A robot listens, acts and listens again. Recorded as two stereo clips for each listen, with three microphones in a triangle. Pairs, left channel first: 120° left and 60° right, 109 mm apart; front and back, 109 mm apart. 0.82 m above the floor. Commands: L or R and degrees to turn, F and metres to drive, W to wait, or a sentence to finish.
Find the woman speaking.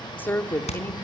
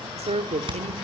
R170
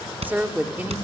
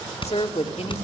L15
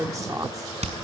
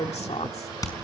Facing the woman speaking, 2 to 4 m away.